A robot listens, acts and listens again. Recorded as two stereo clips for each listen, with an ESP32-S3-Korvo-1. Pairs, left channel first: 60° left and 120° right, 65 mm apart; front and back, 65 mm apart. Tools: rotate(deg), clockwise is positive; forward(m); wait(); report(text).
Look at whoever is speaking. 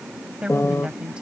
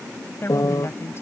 rotate(45)
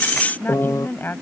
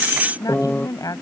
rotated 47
report("Facing the woman speaking.")